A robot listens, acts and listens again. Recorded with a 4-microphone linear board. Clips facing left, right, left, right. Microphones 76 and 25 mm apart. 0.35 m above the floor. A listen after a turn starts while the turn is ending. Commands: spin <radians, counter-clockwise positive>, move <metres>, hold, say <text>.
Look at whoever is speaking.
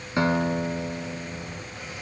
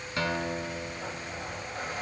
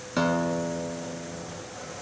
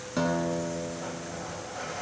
hold
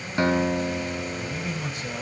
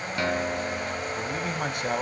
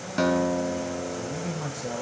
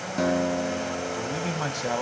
spin -1.05
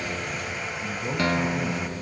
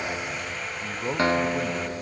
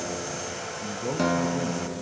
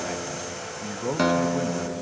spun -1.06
spin -0.70
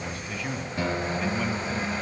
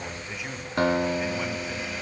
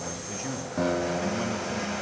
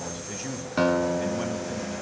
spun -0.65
say Facing the man speaking, 1 to 2 m away.